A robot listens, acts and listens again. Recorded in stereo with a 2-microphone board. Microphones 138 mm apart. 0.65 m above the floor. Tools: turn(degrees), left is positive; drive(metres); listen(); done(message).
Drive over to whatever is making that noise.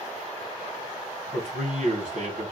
turn(degrees=-65)
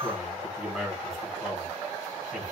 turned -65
drive(metres=1.0)
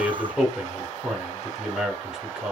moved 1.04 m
drive(metres=1.0)
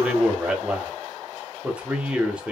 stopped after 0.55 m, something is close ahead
turn(degrees=-10)
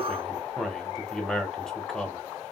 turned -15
done("Arrived at the man speaking, straight ahead.")